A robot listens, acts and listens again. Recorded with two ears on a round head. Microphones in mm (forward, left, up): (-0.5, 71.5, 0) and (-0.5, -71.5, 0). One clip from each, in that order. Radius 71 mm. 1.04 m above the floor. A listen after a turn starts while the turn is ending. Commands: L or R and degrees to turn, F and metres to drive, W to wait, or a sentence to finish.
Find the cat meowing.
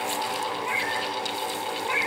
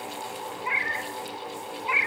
R50
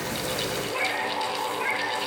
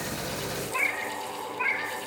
R75
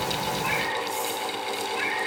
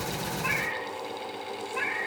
Facing the cat meowing.